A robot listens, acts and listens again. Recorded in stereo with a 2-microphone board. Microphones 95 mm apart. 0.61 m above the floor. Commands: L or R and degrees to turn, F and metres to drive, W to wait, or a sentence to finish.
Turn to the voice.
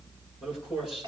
R30
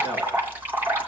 W
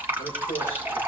L25
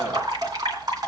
W
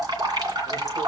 W
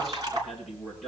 Facing the man speaking.